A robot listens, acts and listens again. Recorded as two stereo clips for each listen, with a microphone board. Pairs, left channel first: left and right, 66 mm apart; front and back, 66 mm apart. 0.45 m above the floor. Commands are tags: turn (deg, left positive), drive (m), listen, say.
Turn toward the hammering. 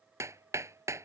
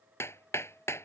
<turn deg="-50"/>
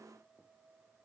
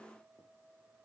<listen/>
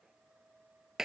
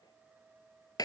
<turn deg="-10"/>
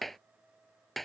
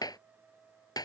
<say>Found it: hammering, straight ahead.</say>